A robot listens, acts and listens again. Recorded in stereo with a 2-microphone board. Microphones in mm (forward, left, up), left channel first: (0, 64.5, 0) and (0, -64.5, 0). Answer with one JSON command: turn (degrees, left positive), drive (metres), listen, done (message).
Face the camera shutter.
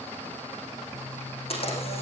{"turn": 50}
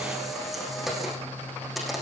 {"done": "Facing the camera shutter, over 4 m away."}